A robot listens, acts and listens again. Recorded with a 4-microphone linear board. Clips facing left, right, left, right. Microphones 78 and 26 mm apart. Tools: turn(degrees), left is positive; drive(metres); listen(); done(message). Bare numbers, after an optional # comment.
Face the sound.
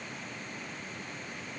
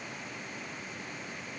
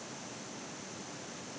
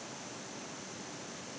listen()
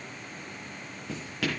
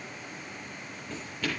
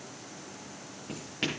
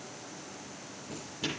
turn(90)
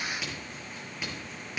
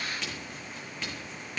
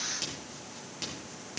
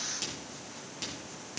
# So it is at 10° left.
turn(10)
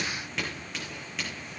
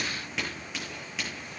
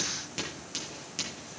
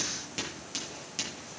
done("Facing the writing.")